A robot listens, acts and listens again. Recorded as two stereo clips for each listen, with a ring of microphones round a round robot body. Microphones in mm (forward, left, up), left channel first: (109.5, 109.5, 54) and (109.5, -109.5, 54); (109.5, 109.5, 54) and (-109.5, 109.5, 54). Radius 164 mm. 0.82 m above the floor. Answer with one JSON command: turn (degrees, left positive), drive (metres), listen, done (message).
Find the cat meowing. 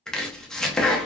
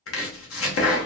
{"listen": true}
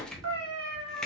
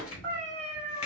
{"turn": -75}
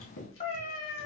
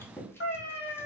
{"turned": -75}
{"turn": 45}
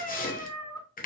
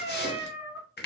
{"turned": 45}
{"turn": 20}
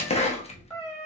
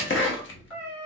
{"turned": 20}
{"turn": 20}
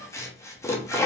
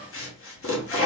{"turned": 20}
{"listen": true}
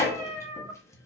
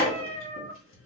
{"done": "Facing the cat meowing."}